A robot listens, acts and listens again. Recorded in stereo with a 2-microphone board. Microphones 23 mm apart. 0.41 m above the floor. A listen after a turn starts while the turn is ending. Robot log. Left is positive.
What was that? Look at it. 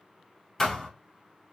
note: The thud: about 20° left or 160° left.
cmd yaw +20
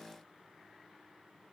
cmd idle
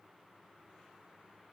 end: I heard a thud, but can't make it out now. It was about straight ahead or 140° left.